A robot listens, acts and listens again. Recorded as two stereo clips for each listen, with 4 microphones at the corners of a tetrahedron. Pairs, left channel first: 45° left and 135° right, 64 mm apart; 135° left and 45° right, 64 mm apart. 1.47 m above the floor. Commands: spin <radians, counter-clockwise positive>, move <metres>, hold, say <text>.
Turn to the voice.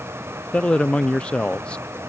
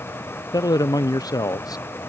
spin 2.09
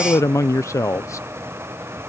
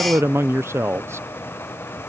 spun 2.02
say Facing the man speaking.